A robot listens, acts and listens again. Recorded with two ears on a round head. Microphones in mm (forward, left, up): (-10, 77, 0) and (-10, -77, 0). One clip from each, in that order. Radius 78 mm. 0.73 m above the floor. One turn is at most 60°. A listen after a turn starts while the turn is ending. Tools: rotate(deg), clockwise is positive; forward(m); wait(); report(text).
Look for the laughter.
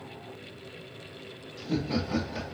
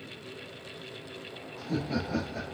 rotate(-40)
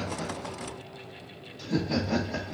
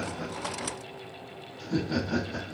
rotate(-60)
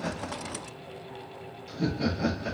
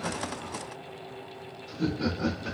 rotate(-35)
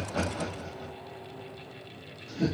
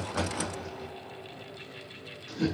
rotate(15)
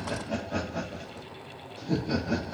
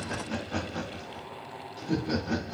report("Facing the laughter.")